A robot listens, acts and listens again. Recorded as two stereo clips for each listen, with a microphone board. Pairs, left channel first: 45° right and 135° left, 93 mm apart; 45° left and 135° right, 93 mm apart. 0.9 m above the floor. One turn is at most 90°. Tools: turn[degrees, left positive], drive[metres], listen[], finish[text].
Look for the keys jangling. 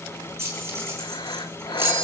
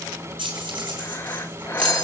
Thought: The keys jangling: 160° right.
Action: turn[-90]
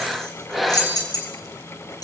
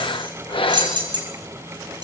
Thought: The keys jangling is now 90° right.
Action: turn[-90]
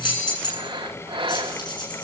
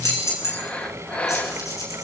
Thought: The keys jangling is now 10° right.
Action: turn[-10]
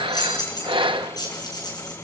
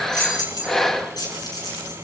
Action: finish[Found it: keys jangling, straight ahead, over 4 m away.]